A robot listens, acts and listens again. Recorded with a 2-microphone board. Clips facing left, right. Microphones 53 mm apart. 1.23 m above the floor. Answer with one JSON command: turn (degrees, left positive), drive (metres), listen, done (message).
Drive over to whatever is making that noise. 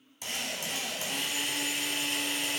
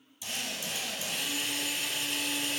{"turn": 60}
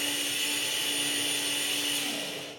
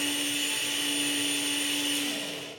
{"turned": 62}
{"drive": 1.0}
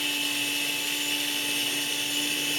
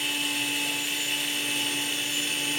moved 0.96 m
{"turn": -10}
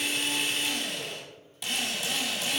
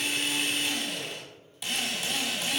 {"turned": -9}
{"drive": 1.0}
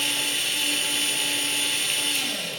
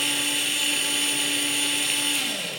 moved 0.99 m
{"drive": 1.0}
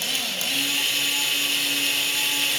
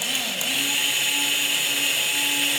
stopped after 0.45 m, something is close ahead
{"turn": -10}
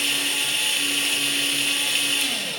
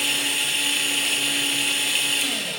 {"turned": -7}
{"done": "I am next to the drill."}